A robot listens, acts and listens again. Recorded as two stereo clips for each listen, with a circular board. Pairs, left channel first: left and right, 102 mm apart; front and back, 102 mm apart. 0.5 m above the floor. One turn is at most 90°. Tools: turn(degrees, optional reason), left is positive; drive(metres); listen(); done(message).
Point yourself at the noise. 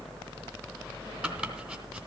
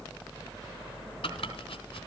turn(degrees=-15, reason="The chopping: 15° right.")
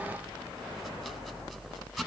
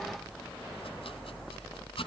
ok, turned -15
done("Found it: chopping, straight ahead, 2 to 4 m away.")